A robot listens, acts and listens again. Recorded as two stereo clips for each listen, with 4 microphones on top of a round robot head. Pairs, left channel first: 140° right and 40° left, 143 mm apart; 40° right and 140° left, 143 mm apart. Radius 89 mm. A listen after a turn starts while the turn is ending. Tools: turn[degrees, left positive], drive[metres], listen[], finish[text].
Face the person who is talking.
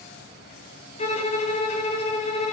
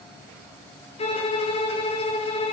Action: listen[]
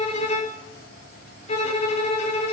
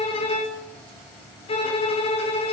Action: listen[]
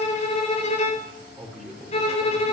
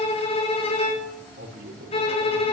Thought: The man speaking: 130° left.
Action: turn[130]
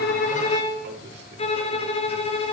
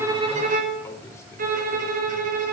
Action: listen[]
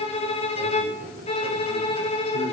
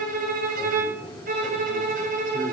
Thought: The man speaking is now 30° left.
Action: turn[30]
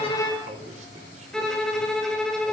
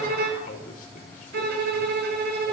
Action: finish[Facing the man speaking.]